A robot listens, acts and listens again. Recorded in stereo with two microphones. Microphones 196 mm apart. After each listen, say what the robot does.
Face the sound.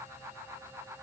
Keep listening.
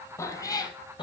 Turn 25° left.
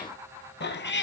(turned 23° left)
Turn 110° left.
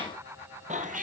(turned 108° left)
Turn 45° right.
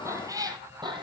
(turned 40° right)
Turn 25° right.
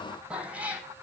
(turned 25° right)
Facing the cat meowing.